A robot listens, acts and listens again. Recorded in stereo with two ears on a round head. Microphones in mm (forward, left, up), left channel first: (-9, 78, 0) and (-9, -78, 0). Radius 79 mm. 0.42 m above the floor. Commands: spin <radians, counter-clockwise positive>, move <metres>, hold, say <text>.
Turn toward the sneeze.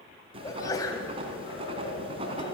spin 0.35
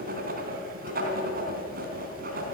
hold
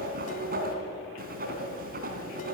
say I heard a sneeze, but can't make it out now. It was about straight ahead or 140° left.